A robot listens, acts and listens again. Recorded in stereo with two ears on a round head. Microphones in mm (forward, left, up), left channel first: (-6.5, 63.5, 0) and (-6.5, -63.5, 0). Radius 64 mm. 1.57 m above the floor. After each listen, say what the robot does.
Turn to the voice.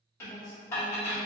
Turn 55° right.
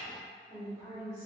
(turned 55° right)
Turn 25° right.
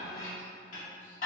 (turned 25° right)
Keep listening.
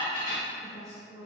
Turn 30° right.
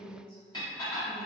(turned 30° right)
Facing the woman speaking.